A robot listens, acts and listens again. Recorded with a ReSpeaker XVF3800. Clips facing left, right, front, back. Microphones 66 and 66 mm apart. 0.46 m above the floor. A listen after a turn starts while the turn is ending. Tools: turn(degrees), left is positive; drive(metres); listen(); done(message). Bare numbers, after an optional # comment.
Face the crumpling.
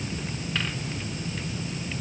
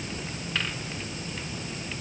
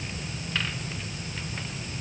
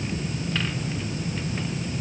listen()
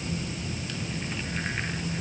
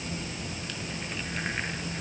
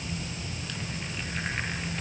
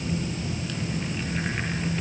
listen()
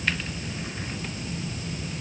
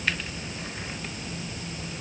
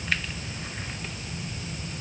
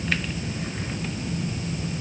done("I can't make out crumpling.")